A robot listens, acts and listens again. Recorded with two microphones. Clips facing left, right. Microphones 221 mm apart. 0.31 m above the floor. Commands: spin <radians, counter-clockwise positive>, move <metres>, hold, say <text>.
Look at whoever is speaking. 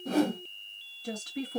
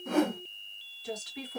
spin 0.96
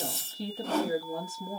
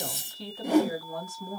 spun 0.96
spin 0.52
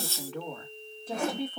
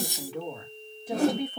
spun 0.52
spin -0.26
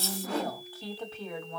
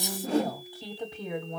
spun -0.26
spin -0.35
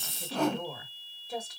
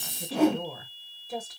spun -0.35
say Found it: a woman speaking, straight ahead, 1 to 2 m away.